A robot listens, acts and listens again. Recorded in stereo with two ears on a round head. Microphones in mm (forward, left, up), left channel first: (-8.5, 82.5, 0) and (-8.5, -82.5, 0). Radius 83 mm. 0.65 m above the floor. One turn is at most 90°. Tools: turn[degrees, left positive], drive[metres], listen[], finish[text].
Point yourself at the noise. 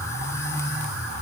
Action: listen[]
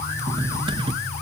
Thought: The cutlery clinking: about 30° right or 150° right.
Action: turn[-30]
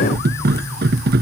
Thought: So it is at 120° right.
Action: turn[-90]
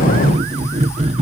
Thought: The cutlery clinking is now 35° right.
Action: turn[-35]
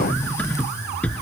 Action: finish[Found it: cutlery clinking, straight ahead.]